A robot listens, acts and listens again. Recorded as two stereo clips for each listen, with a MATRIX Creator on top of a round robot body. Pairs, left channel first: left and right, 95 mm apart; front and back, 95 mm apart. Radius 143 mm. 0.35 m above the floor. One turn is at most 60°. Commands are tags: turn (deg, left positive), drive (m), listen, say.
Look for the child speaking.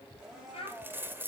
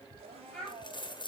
<turn deg="60"/>
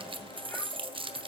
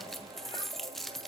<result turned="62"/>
<turn deg="20"/>
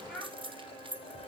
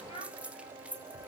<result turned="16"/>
<say>Found it: a child speaking, straight ahead.</say>